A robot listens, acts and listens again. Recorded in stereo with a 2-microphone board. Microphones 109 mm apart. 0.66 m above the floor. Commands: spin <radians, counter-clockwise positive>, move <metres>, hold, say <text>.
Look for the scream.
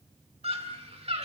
spin -1.13
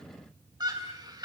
spin -0.70
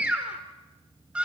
spin -0.17
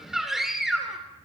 say Facing the scream, 1 to 2 m away.